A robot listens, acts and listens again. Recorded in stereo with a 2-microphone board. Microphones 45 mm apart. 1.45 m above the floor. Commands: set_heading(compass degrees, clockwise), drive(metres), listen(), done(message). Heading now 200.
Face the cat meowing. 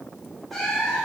set_heading(170)
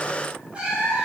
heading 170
set_heading(195)
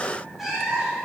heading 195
done("Found it: a cat meowing, straight ahead.")